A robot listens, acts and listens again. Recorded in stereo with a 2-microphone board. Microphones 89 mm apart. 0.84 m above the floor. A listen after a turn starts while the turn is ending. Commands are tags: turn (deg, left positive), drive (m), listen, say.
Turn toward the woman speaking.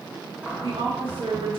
<turn deg="-75"/>
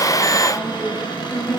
<say>Found it: a woman speaking, straight ahead.</say>